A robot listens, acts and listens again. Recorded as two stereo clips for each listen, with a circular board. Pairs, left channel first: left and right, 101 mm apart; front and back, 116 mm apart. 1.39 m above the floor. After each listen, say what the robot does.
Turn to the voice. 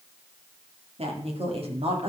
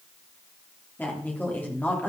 Turn 75° right.
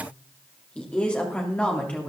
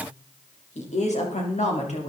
Turn 10° left.
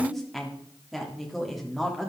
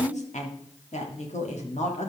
Facing the woman speaking.